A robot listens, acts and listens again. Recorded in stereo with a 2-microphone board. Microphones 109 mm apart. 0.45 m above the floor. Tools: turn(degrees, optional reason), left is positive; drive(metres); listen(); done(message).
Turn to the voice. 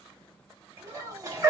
turn(degrees=-55, reason="The child speaking: about 55° right or 125° right.")
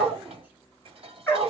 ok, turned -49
listen()
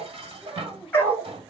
turn(degrees=-20, reason="So it is at 20° right.")
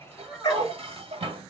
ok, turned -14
done("Found it: a child speaking, straight ahead.")